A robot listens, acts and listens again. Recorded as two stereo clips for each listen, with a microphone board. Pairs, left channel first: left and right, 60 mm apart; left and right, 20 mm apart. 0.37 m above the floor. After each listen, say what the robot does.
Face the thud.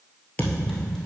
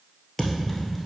Turn 30° left.
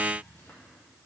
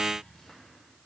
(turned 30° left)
Keep listening.
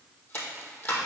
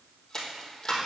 I heard a thud, but can't make it out now. It was about straight ahead or 120° left.